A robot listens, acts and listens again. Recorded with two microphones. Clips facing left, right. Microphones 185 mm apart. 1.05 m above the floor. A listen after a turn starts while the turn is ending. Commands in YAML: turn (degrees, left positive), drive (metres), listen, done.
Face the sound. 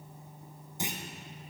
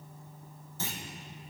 turn: 15
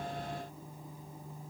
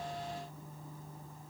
listen: true
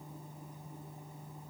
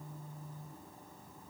done: "I heard a clunk, but can't make it out now. It was about straight ahead or 150° left."